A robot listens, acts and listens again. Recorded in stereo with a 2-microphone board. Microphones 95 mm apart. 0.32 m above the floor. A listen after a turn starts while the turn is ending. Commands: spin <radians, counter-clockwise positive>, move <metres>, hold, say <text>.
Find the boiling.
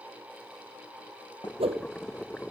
spin 0.52
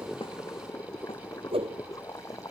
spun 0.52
spin 2.53
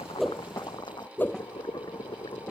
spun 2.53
spin 0.87
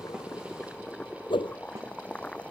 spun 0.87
spin 0.17
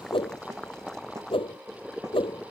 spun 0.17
say Found it: boiling, straight ahead.